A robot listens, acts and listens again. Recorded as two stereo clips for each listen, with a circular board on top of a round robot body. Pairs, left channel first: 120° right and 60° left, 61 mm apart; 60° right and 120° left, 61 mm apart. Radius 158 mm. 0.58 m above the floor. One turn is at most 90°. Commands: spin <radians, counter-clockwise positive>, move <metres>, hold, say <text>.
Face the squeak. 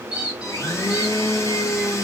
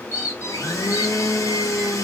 spin -0.35
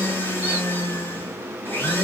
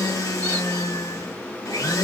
hold
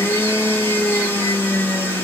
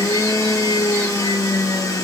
hold
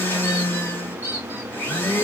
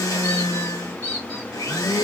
say Found it: a squeak, straight ahead, under 1 m away.